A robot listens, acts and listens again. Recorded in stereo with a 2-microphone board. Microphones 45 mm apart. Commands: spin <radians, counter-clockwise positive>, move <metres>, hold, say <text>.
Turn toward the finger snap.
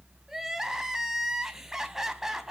hold
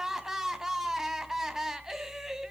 hold
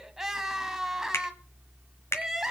spin 1.57
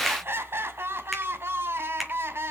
hold
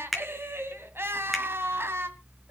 say Facing the finger snap.